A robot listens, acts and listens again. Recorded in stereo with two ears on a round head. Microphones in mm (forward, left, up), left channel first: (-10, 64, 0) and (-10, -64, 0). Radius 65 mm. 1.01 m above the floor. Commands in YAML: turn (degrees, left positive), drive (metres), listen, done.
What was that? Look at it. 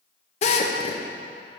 turn: 50
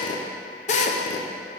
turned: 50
turn: 65
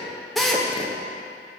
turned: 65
done: "Facing the drill."